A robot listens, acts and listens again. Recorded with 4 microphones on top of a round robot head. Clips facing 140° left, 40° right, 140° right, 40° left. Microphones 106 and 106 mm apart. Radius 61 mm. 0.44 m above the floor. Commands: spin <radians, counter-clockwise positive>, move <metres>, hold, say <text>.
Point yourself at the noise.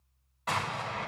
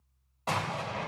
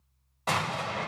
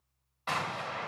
spin -1.66
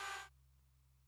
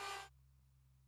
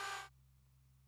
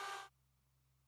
say Facing where the explosion came from. I can't hear it now.